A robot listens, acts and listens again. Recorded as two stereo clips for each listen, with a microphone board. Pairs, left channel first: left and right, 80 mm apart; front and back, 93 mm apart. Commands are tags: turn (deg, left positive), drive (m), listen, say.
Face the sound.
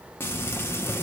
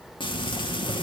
<turn deg="30"/>
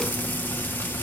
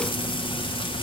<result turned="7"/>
<turn deg="20"/>
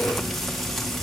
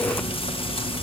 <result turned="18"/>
<say>Facing the frying, 1 to 2 m away.</say>